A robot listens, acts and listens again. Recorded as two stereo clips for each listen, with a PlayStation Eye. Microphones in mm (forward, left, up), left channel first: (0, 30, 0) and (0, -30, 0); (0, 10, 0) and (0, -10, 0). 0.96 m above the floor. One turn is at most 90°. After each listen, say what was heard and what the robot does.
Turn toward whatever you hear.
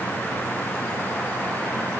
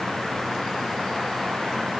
Keep listening.
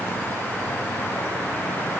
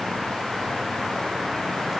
Keep listening.
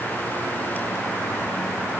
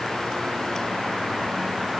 I can't make out anything to turn to.